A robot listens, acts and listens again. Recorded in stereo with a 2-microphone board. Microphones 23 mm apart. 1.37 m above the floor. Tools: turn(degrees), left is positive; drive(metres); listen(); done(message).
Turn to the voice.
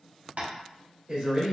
turn(degrees=-40)
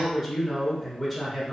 done("Facing the man speaking, 1 to 2 m away.")